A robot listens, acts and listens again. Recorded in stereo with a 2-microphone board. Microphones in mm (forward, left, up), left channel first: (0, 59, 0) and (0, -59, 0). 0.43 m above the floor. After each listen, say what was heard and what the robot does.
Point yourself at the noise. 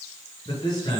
The man speaking: about 40° left or 140° left. Turn 40° left.
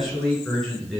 Found it: a man speaking, straight ahead.